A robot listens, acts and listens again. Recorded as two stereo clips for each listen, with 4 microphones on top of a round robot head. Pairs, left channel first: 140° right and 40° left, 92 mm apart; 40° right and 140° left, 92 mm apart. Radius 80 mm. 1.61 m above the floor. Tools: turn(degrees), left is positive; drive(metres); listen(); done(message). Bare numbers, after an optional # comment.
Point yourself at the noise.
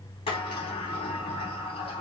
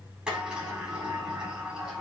# The sliding door: 145° right.
turn(-145)
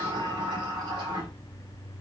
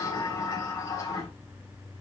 # The sliding door is now 10° left.
turn(10)
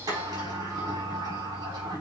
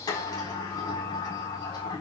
done("Found it: a sliding door, straight ahead, over 4 m away.")